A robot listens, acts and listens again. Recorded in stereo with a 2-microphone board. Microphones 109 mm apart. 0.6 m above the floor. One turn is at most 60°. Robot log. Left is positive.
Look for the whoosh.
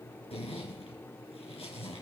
cmd idle
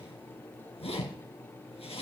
cmd idle
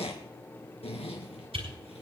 note: The whoosh: about 75° right or 105° right.
cmd yaw -60
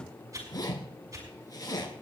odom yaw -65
note: So it is at 40° right.
cmd yaw -40
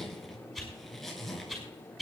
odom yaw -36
end: Facing the whoosh.